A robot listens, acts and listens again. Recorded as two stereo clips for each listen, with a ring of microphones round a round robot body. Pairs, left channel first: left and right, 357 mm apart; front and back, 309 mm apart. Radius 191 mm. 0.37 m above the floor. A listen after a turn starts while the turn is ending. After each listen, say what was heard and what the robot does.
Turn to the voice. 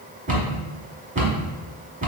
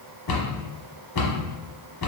Keep listening.
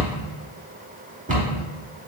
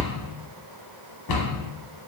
Keep listening.
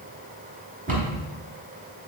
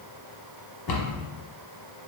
I can't make out anyone speaking, only a cupboard door.